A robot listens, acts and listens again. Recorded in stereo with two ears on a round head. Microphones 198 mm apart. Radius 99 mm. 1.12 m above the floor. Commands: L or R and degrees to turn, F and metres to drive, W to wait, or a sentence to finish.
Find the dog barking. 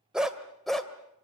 L30
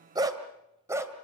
R15
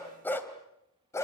L15
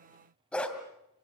Found it: a dog barking, straight ahead, 2 to 4 m away.